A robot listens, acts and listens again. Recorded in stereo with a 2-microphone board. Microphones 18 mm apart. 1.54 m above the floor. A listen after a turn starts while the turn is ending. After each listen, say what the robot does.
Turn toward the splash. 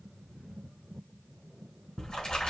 Turn 60° left.
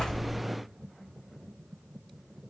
Keep listening.
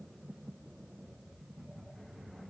I heard a splash, but can't make it out now. It was about straight ahead or 60° left.